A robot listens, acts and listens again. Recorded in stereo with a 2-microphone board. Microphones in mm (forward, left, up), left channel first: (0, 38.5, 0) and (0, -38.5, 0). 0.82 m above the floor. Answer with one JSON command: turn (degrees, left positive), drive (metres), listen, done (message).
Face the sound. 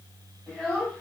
{"turn": -30}
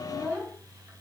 {"turn": -140}
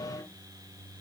{"listen": true}
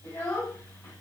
{"turn": 40}
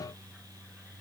{"listen": true}
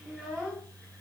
{"done": "Facing the child speaking."}